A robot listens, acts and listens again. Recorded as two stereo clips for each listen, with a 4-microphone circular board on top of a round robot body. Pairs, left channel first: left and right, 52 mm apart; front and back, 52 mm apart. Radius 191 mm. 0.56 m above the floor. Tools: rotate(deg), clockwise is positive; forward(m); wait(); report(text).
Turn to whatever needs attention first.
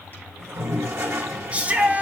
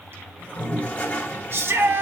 rotate(150)
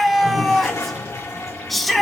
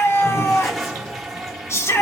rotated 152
report("Found it: a shout, straight ahead.")